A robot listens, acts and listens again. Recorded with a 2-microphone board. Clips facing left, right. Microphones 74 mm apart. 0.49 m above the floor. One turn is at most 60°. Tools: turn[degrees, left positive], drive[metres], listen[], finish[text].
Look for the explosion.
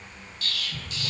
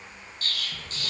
Thought: The explosion: about 40° right or 140° right.
Action: turn[-40]
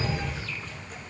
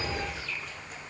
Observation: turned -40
Action: listen[]
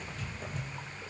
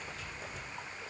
Action: finish[I heard an explosion, but can't make it out now. It was about straight ahead or 100° right.]